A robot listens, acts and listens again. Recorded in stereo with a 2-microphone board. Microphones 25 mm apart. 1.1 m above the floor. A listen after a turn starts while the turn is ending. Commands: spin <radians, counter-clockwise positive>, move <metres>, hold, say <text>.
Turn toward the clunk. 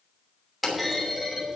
spin 0.52
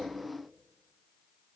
hold
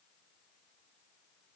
say I heard a clunk, but can't make it out now. It was about 30° right or 150° left.